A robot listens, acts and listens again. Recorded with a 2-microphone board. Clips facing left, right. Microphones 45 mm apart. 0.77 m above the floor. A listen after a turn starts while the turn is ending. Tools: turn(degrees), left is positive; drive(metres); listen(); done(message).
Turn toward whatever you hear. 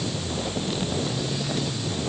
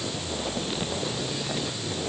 listen()
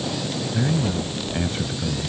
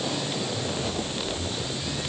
turn(degrees=55)
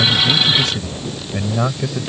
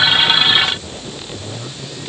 turn(degrees=55)
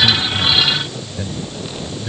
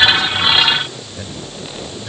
done("Facing the man speaking.")